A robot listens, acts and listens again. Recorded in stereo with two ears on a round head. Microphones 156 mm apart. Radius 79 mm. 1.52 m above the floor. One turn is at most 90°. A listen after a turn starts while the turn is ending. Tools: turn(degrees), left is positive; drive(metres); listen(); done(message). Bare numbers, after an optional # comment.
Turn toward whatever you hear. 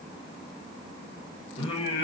# The singing: about 25° left or 155° left.
turn(25)
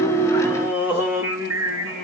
# So it is at 25° right.
turn(-25)
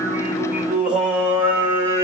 # The singing is now 15° right.
turn(-15)
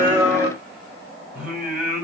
done("Facing the singing, 2 to 4 m away.")